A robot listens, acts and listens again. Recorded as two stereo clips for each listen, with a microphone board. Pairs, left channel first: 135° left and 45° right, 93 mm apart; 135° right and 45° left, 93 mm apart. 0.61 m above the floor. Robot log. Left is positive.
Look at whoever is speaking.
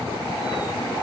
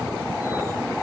cmd idle
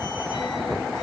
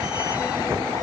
cmd idle
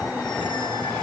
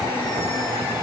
end: I can't make out anyone speaking to turn to.